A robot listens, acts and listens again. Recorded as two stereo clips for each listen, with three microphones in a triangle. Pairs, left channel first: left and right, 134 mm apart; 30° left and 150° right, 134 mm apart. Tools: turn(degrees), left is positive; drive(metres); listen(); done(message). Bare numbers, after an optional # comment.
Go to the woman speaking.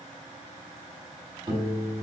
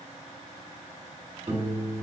listen()
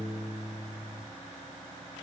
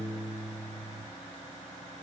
listen()
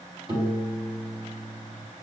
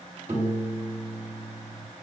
done("I can't make out a woman speaking to turn to.")